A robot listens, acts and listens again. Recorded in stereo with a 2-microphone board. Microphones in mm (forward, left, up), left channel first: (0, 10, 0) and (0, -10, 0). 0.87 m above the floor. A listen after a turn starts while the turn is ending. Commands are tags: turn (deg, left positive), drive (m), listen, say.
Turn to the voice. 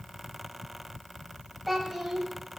<turn deg="-30"/>
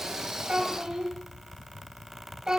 <turn deg="-145"/>
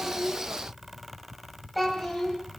<say>Facing the child speaking.</say>